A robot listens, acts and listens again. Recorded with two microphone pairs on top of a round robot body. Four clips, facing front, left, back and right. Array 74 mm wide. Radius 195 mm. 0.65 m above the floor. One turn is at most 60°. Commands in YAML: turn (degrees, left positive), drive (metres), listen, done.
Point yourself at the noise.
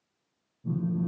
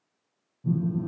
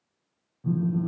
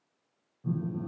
turn: -60
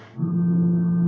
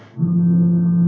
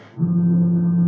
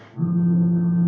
turn: -60
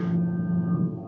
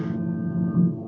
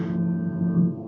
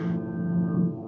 turn: -50
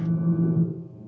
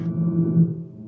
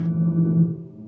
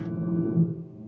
done: "Facing the phone buzzing, 1 to 2 m away."